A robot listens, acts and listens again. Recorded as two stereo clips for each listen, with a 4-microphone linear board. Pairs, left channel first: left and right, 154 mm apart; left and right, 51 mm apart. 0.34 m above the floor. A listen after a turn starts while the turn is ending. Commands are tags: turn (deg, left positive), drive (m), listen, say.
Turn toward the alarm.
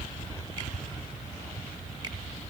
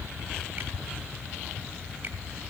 <listen/>
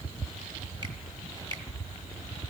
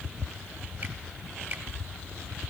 <listen/>
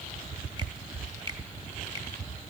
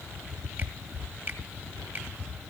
<say>I can't make out an alarm to turn to.</say>